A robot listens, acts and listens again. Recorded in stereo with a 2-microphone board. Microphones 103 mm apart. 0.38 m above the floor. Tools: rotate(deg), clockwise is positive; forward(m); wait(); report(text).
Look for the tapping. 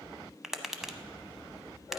rotate(-30)
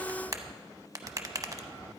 rotate(35)
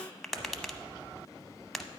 report("Found it: tapping, straight ahead.")